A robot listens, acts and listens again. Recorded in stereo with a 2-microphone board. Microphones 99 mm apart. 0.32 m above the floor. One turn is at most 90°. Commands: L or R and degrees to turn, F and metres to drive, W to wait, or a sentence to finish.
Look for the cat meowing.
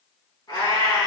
L50
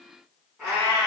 Found it: a cat meowing, straight ahead, 1 to 2 m away.